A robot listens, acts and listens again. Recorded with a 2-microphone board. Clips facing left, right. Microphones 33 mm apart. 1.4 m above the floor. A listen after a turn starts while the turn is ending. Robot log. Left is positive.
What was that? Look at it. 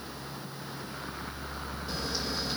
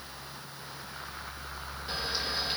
cmd idle
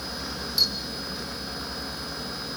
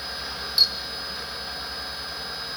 note: The camera shutter: about 35° right or 145° right.
cmd yaw -35
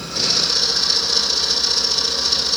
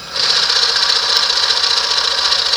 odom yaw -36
note: So it is at 110° right.
cmd yaw -110
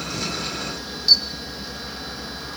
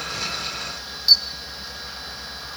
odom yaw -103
end: Found it: a camera shutter, straight ahead, 1 to 2 m away.